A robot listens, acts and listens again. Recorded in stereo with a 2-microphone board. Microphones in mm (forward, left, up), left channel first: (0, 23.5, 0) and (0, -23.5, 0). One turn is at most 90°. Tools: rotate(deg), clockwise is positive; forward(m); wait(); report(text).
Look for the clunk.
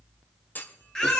rotate(-40)
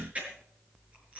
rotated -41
wait()
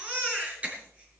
report("I heard a clunk, but can't make it out now. It was about straight ahead or 100° left.")